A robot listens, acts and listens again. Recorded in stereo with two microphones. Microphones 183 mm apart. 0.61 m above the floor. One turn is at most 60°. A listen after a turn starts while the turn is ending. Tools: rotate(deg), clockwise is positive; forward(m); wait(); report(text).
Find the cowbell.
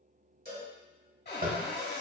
rotate(50)
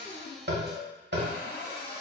report("Found it: a cowbell, straight ahead.")